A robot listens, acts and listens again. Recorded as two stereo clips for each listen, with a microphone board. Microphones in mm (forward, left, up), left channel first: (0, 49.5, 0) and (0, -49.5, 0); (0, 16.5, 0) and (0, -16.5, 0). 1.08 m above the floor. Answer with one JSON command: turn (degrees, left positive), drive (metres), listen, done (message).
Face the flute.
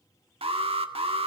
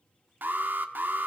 {"listen": true}
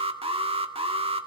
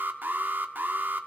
{"listen": true}
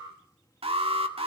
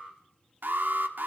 {"done": "I can't make out a flute, only an alarm."}